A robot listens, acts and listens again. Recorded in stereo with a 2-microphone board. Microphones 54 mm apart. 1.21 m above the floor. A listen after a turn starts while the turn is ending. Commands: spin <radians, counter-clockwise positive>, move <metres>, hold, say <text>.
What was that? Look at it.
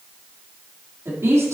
spin -1.22
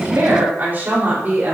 spin -0.61
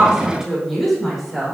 say Facing the woman speaking, over 4 m away.